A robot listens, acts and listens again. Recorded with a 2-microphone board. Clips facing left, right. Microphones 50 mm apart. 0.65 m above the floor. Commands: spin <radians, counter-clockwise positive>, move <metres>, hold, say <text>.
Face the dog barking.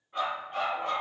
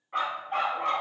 spin -1.57
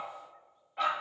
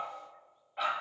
say Facing the dog barking, 1 to 2 m away.